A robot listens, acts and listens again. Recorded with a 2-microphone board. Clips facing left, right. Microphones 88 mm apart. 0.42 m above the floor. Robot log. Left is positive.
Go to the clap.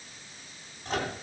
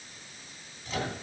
cmd idle
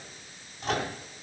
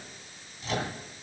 cmd idle
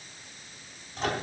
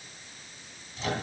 end: I can't make out a clap to turn to.